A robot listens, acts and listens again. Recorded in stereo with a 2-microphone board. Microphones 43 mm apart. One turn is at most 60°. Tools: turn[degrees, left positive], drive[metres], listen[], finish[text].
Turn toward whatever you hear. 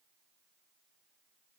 Action: listen[]
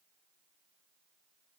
Action: listen[]
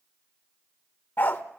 Thought: The dog barking: about 50° left or 130° left.
Action: turn[50]
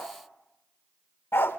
Thought: So it is at 75° left.
Action: turn[60]
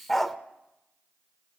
Action: finish[Facing the dog barking, under 1 m away.]